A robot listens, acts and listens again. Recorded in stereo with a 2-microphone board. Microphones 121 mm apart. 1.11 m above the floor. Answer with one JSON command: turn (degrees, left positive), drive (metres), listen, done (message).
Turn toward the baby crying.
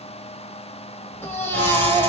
{"turn": 15}
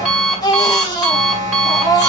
{"turn": 150}
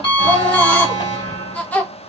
{"turn": 10}
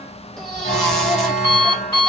{"listen": true}
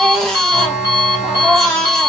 {"done": "Found it: a baby crying, straight ahead."}